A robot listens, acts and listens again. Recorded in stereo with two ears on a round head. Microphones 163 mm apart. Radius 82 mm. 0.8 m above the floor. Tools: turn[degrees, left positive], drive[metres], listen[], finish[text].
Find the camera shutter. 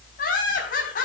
Action: listen[]
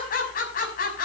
Action: listen[]
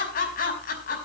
Action: finish[I can't make out a camera shutter, only laughter.]